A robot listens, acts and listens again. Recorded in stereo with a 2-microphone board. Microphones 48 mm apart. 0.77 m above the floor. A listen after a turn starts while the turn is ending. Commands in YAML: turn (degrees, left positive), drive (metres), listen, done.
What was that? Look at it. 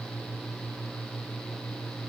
listen: true
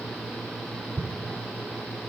turn: -90
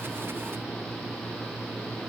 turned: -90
done: "I heard an explosion from this way, but can't make it out now."